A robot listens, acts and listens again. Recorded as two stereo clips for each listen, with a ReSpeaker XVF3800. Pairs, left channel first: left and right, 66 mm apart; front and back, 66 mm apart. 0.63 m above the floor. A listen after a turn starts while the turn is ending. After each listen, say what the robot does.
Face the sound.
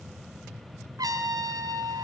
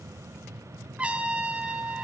Turn 105° right.
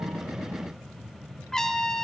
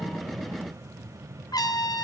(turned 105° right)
Turn 10° left.
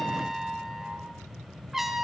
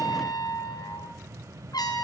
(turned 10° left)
Facing the trumpet, 2 to 4 m away.